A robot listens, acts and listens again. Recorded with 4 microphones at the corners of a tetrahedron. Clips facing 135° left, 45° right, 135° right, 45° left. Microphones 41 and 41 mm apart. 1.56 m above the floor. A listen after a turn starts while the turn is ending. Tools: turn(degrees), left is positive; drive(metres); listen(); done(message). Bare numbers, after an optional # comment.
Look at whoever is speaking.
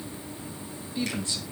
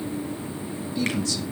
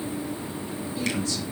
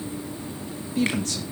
# The man speaking: 70° left.
turn(70)
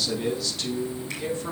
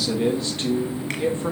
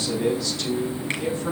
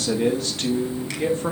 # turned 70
# The man speaking is now 10° left.
turn(10)
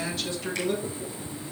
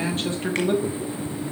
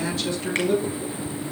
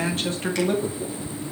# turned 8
done("Facing the man speaking, 2 to 4 m away.")